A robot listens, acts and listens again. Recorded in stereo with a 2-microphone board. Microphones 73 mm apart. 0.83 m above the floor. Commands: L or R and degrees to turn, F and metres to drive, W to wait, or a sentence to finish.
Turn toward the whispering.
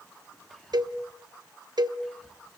L30
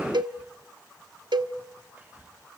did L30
R25
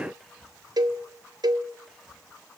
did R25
Facing the whispering.